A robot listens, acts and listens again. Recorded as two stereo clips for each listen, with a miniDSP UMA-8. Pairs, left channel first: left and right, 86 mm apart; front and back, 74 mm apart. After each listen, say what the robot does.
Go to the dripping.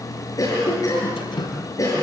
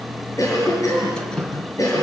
Turn 80° left.
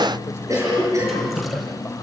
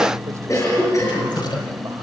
Drive 1.0 m forward.
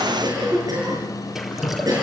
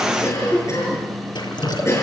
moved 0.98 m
Drive 1.0 m forward.
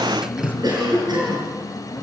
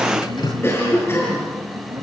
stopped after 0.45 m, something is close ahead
Turn 10° right.
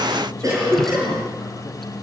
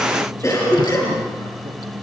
Keep listening.
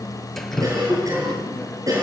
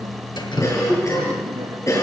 Blocked. The dripping is further on, straight ahead.